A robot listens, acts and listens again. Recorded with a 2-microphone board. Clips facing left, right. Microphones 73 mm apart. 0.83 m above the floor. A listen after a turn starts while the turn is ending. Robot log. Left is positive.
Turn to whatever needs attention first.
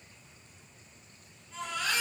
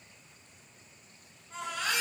cmd yaw -90
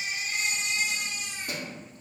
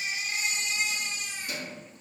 end: Facing the baby crying, 1 to 2 m away.